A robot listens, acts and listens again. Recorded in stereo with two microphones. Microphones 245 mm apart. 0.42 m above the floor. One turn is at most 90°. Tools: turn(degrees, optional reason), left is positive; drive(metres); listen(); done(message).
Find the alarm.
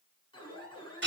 turn(degrees=20, reason="The alarm: about 20° left or 160° left.")
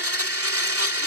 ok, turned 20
listen()
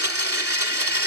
listen()
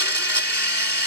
done("I heard an alarm, but can't make it out now. It was about straight ahead or 140° left.")